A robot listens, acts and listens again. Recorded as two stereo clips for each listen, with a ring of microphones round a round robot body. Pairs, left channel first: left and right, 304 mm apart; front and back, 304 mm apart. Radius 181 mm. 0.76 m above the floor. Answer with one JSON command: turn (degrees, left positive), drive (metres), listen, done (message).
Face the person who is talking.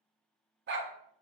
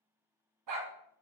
{"listen": true}
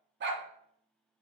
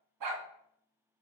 {"listen": true}
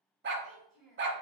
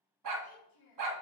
{"done": "Found it: a child speaking, straight ahead."}